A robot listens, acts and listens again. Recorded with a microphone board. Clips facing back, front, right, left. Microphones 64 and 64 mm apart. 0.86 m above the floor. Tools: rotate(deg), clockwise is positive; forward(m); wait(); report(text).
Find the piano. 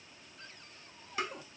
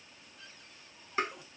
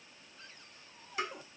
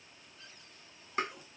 wait()
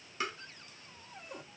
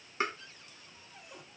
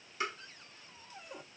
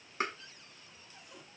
wait()
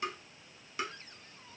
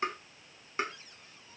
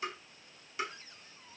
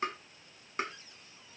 report("I can't make out a piano to turn to.")